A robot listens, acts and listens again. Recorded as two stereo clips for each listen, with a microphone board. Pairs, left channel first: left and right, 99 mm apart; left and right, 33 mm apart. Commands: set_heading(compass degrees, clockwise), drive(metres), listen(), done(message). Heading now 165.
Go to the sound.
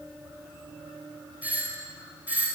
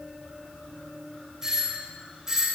set_heading(195)
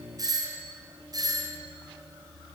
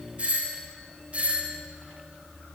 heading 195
set_heading(335)
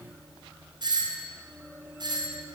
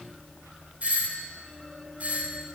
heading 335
set_heading(25)
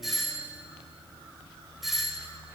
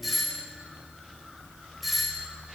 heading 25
drive(1.0)
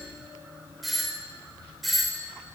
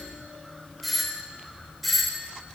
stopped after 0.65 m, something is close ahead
done("Something is in my way. I am facing the doorbell but have not reached it.")